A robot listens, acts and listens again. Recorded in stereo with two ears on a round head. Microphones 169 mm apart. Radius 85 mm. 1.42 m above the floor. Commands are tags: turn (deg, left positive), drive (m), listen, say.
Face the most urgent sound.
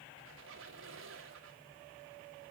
<listen/>
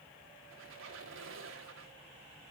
<listen/>
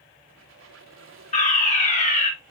<turn deg="40"/>
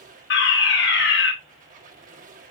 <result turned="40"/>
<turn deg="95"/>
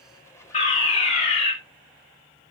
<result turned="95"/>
<turn deg="35"/>
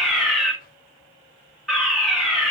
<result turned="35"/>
<say>Facing the fire alarm.</say>